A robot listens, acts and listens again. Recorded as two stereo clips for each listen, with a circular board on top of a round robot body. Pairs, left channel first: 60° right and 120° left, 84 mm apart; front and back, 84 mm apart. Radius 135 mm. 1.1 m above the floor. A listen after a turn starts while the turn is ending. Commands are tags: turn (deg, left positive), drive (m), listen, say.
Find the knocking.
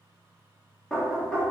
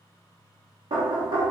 <turn deg="-145"/>
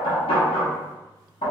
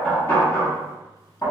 <turn deg="-50"/>
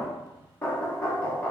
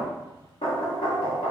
<turn deg="10"/>
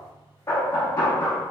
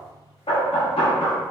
<say>Facing the knocking, under 1 m away.</say>